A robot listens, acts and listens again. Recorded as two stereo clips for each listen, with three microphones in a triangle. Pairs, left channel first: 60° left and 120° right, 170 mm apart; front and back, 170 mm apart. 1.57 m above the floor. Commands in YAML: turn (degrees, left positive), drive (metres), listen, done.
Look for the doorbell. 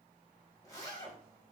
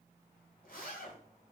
listen: true
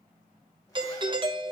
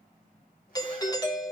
turn: -60
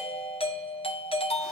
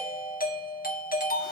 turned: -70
turn: 10
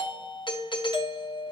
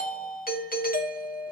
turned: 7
done: "Found it: a doorbell, straight ahead, under 1 m away."